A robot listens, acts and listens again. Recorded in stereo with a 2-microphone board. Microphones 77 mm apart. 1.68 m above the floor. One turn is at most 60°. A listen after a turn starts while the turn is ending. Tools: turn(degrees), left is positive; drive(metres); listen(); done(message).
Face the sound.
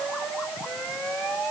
listen()
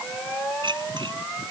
turn(degrees=-60)
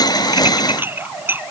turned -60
turn(degrees=-25)
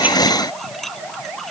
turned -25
done("Found it: dishes clattering, straight ahead.")